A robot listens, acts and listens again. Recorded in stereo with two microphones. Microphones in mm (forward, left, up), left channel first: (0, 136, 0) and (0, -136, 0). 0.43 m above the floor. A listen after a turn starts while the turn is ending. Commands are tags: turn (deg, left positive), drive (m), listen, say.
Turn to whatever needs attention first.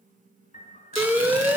<turn deg="-30"/>
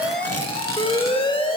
<turn deg="20"/>
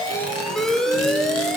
<say>Found it: an alarm, straight ahead.</say>